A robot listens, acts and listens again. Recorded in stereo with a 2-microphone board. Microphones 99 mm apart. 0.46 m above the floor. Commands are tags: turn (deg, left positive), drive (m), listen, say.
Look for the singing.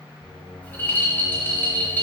<turn deg="55"/>
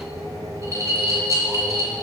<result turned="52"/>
<turn deg="-10"/>
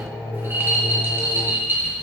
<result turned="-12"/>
<say>Found it: singing, straight ahead, over 4 m away.</say>